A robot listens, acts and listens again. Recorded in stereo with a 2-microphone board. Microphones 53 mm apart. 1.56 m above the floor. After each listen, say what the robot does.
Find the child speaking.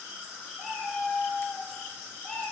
Keep listening.
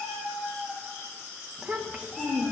Turn 35° right.
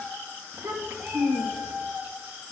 Turn 100° right.
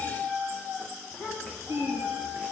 Facing the child speaking, 2 to 4 m away.